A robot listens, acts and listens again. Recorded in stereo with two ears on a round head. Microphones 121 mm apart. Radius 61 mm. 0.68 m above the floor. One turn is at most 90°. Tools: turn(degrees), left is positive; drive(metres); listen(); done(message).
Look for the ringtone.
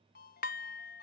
turn(degrees=75)
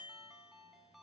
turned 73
done("Found it: a ringtone, straight ahead, 2 to 4 m away.")